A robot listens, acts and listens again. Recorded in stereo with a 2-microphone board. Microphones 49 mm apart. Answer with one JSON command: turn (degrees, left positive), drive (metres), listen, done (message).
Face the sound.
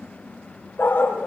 {"turn": 45}
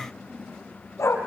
{"turn": 85}
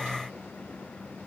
{"listen": true}
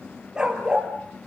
{"turn": -15}
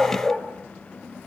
{"done": "Facing the dog barking, 2 to 4 m away."}